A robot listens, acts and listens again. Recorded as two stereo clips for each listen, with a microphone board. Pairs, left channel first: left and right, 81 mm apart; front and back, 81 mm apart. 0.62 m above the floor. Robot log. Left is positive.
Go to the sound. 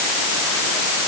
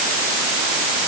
cmd idle
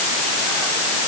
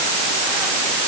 cmd idle
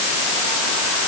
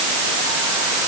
end: I can't make out anything.